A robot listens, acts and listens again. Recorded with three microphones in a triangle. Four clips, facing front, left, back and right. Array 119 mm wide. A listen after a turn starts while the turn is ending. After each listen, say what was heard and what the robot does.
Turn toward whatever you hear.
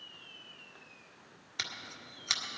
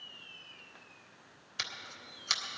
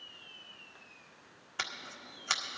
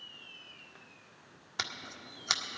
The scissors: 125° right. Turn 125° right.
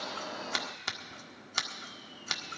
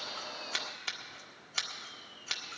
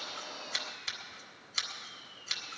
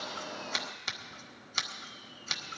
The scissors is now 10° left. Turn 10° left.
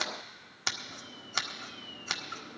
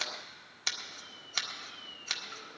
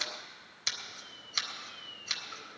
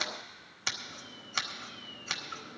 Facing the scissors, 1 to 2 m away.